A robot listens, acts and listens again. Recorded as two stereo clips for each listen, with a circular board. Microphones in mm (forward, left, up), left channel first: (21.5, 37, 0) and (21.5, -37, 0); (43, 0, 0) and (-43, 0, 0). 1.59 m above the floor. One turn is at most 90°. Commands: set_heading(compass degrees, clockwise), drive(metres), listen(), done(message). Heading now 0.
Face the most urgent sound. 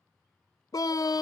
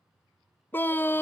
set_heading(295)
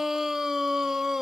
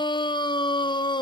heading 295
done("Found it: a scream, straight ahead.")